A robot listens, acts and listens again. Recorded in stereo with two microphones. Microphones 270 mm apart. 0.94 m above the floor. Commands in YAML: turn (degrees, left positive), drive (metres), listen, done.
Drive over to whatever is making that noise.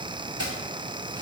turn: 70
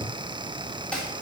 drive: 1.0
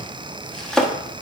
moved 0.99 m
drive: 1.0
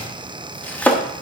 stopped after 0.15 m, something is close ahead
done: "I am next to the chopping."